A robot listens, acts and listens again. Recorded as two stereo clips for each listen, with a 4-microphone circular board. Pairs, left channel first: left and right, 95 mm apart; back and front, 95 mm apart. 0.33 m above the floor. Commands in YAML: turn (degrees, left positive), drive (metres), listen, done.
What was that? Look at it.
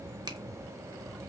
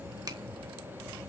turn: -45
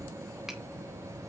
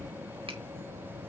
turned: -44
listen: true
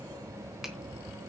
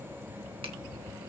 listen: true
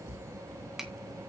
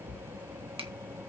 done: "Facing the finger snap."